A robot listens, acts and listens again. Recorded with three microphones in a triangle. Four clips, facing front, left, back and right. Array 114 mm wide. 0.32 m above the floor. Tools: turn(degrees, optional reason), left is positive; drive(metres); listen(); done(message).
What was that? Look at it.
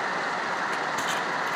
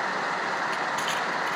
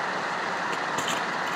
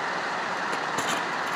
turn(degrees=-125, reason="The crushing: 125° right.")
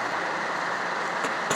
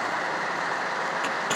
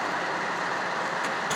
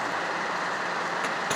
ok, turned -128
done("Facing the crushing, 2 to 4 m away.")